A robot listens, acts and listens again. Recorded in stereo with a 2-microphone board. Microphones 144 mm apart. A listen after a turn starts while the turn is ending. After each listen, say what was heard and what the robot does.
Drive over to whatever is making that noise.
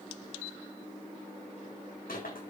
Turn 90° left.
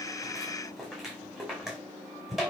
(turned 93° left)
Drive 1.0 m forward.
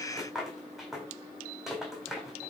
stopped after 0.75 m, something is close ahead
Blocked. The rattle is further on, straight ahead.